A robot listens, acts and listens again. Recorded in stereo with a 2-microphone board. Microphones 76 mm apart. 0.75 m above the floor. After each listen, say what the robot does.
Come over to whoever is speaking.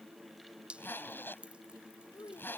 Turn 90° left.
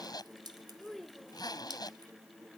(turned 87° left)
Drive 1.0 m forward.
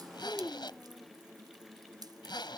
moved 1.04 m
Turn 10° left.
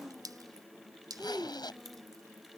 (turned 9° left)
Drive 1.0 m forward.
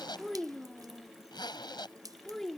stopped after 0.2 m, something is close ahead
I am next to the child speaking.